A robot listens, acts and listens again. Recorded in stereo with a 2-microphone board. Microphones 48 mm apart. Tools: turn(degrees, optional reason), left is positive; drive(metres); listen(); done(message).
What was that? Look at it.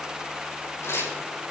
turn(degrees=90)
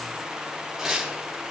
done("Facing the tearing paper, over 4 m away.")